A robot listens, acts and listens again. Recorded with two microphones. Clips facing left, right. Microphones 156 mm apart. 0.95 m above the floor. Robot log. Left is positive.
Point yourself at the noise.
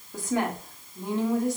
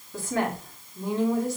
cmd yaw +30
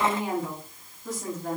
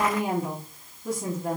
note: So it is at 10° right.
cmd yaw -10
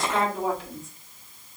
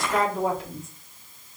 end: Found it: a woman speaking, straight ahead, 1 to 2 m away.